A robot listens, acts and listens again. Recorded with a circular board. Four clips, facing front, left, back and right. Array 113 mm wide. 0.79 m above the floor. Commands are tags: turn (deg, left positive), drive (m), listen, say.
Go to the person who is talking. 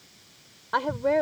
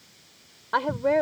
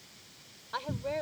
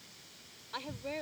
<turn deg="60"/>
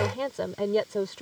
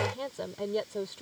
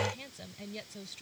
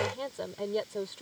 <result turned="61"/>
<drive m="1.0"/>
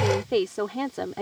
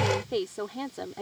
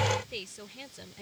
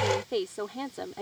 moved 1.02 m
<drive m="1.0"/>
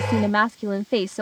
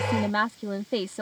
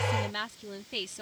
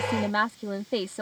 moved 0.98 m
<drive m="1.0"/>
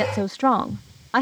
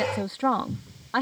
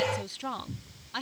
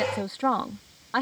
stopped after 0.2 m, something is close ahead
<say>Arrived at the woman speaking, straight ahead.</say>